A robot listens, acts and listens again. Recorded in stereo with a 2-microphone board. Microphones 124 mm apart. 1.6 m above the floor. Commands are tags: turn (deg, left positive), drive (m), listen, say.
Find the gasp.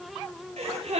<turn deg="-60"/>
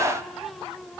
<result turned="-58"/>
<listen/>
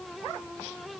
<say>I heard a gasp, but can't make it out now. It was about 5° right or 60° right.</say>